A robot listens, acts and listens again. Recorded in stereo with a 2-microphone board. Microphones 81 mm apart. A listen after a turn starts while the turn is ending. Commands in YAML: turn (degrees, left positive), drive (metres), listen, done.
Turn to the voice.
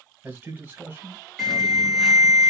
turn: -25
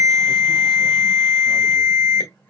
listen: true
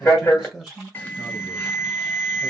done: "Found it: a man speaking, straight ahead."